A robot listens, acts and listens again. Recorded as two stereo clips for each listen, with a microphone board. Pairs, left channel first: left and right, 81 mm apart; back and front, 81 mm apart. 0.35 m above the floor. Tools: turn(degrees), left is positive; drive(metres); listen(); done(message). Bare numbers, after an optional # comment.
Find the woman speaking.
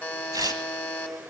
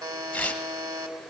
listen()
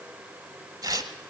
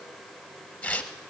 listen()
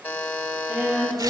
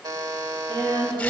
# The woman speaking: 10° right.
turn(-10)
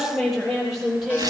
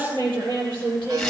done("Facing the woman speaking, over 4 m away.")